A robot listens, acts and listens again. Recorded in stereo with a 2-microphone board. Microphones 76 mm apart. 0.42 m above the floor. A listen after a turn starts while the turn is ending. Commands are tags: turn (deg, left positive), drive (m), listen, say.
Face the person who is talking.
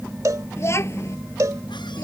<turn deg="40"/>
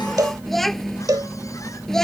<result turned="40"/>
<say>Found it: a child speaking, straight ahead.</say>